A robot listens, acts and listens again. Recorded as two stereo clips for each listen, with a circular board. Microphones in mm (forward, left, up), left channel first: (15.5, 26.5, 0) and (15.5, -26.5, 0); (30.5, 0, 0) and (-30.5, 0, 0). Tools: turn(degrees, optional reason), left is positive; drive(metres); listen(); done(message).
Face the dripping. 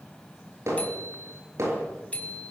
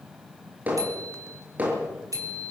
listen()
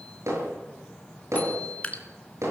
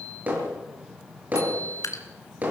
turn(degrees=25, reason="The dripping: 25° left.")
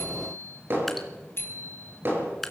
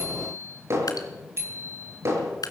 done("Facing the dripping.")